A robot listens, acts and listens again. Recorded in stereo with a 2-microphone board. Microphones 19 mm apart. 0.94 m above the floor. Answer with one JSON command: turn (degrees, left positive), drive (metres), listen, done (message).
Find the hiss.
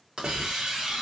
{"turn": -60}
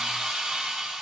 {"turn": -60}
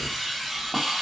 {"turn": -10}
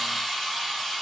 {"done": "Found it: a hiss, straight ahead."}